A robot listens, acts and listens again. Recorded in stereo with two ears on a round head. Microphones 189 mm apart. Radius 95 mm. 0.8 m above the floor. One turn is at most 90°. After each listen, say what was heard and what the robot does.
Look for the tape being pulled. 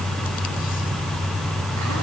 Keep listening.
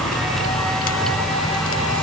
Keep listening.
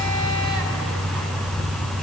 I can't make out tape being pulled.